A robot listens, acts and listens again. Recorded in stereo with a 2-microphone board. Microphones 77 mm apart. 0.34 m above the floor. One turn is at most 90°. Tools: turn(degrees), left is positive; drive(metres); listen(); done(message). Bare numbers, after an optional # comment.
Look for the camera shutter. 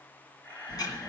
turn(30)
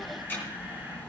listen()
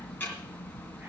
listen()
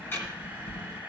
# So it is at 15° right.
turn(-15)
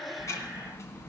listen()
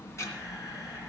listen()
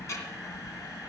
done("Facing where the camera shutter came from. I can't hear it now.")